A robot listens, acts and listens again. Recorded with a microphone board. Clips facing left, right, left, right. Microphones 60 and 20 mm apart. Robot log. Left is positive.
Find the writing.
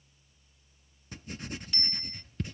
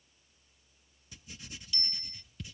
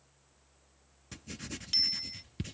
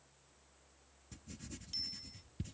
note: The writing: about 50° left or 130° left.
cmd yaw +50
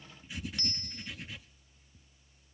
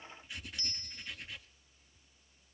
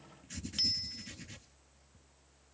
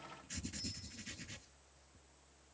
end: Found it: writing, straight ahead.